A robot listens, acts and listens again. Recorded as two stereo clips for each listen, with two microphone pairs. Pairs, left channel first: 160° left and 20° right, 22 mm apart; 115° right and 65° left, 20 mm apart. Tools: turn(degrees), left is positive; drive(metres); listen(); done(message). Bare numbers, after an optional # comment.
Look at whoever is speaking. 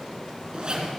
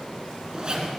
listen()
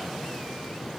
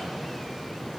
listen()
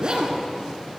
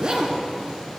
done("I can't make out anyone speaking to turn to.")